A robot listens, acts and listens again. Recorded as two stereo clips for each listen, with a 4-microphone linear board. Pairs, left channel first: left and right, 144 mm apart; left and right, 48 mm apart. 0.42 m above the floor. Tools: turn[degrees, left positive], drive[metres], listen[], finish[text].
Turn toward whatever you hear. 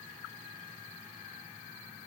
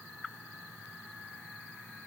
Action: listen[]
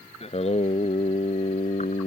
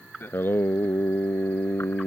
Thought: The singing: about 60° left or 120° left.
Action: turn[60]
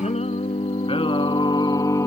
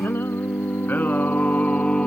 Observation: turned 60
Thought: So it is at 20° left.
Action: turn[20]
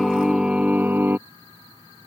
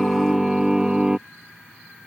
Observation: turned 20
Thought: The singing is now 15° right.
Action: turn[-15]
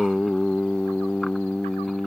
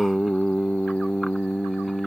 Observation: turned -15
Action: finish[Found it: singing, straight ahead.]